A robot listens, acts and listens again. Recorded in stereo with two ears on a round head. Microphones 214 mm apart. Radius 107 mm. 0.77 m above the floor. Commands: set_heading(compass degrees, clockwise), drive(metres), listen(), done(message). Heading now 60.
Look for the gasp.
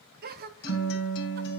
set_heading(100)
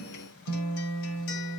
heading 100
listen()
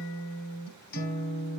done("I heard a gasp, but can't make it out now. It was about straight ahead or 100° right.")